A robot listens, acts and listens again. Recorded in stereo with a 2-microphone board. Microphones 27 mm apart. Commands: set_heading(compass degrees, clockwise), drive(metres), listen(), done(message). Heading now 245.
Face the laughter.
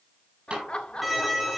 set_heading(205)
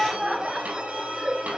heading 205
set_heading(225)
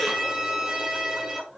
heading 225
set_heading(235)
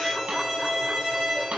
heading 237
listen()
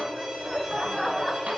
done("Facing the laughter.")